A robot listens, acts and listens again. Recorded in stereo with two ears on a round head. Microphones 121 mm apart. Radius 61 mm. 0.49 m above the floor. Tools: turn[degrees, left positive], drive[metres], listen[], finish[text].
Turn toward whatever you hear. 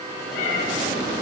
Thought: The cat meowing: about 60° left or 120° left.
Action: turn[60]
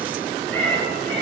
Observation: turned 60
Thought: So it is at 10° left.
Action: turn[10]
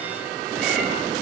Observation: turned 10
Action: listen[]
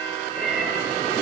Action: finish[Facing the cat meowing, over 4 m away.]